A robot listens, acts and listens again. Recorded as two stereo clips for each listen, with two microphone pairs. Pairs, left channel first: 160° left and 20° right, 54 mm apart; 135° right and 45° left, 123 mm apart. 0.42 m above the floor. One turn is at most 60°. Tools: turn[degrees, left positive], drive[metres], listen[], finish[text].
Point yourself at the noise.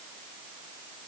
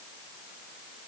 Action: listen[]
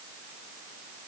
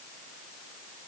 Action: listen[]
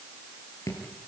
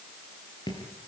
Thought: The dripping: 175° left.
Action: turn[60]
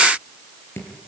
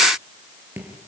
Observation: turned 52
Thought: The dripping is now 120° left.
Action: turn[60]
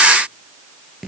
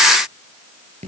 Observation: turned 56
Thought: The dripping is now 65° left.
Action: turn[60]
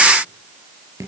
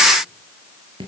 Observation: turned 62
Action: finish[Facing the dripping, over 4 m away.]